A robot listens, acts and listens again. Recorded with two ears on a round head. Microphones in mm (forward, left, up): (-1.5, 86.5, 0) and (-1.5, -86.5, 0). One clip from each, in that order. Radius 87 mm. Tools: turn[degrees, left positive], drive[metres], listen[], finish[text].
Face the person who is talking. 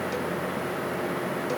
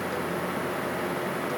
Action: listen[]
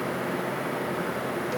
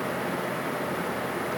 Action: listen[]
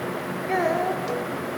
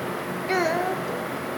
Action: turn[-90]
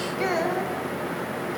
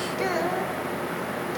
Thought: So it is at 10° right.
Action: turn[-10]
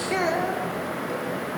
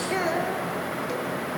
Action: finish[Facing the child speaking, 2 to 4 m away.]